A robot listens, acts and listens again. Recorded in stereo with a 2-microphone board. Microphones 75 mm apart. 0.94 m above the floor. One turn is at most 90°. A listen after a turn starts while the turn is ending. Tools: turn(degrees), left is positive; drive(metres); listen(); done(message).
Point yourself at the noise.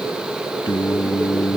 turn(degrees=75)
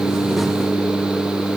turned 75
turn(degrees=30)
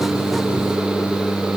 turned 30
done("Facing the singing.")